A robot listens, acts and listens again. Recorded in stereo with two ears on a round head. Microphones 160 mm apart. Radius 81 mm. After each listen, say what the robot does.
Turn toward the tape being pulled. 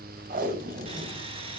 Turn 55° right.
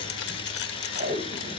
Turn 55° right.
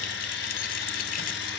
Keep listening.
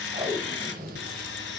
Turn 20° right.
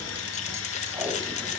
Keep listening.
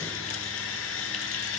Keep listening.
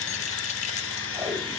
I heard tape being pulled from this way, but can't make it out now.